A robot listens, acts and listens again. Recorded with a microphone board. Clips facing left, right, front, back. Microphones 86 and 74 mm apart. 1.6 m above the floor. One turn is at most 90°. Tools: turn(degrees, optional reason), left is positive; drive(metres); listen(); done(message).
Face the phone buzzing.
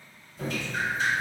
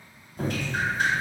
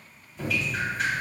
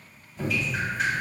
listen()
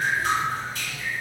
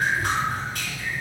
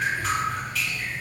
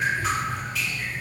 listen()
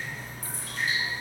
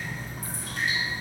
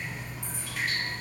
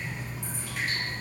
done("I can't make out a phone buzzing, only dripping.")